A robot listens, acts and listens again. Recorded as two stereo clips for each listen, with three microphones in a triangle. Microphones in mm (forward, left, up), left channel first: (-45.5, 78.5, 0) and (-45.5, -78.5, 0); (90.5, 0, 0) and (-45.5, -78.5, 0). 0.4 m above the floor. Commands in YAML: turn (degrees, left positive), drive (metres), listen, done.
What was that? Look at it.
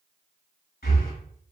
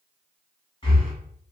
turn: 85
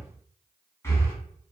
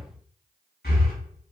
turn: 15
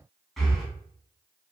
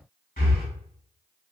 done: "Found it: breathing, straight ahead, 1 to 2 m away."